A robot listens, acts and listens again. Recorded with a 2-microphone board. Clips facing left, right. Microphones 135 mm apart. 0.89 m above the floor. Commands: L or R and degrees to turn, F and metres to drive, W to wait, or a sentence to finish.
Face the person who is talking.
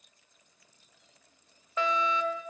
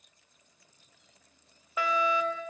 W
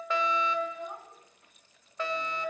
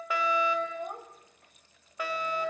R55
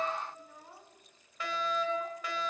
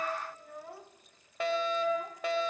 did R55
R70
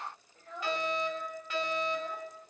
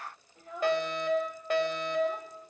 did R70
R10
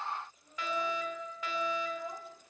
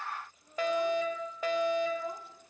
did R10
Facing the child speaking.